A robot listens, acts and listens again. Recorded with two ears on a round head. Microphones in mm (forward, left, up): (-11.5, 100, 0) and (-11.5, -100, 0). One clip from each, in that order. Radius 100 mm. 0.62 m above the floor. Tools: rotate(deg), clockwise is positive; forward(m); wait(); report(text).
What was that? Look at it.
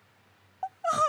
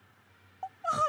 rotate(-20)
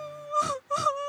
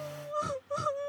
rotate(-135)
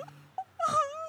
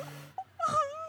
rotate(-10)
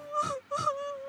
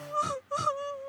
report("Found it: crying, straight ahead.")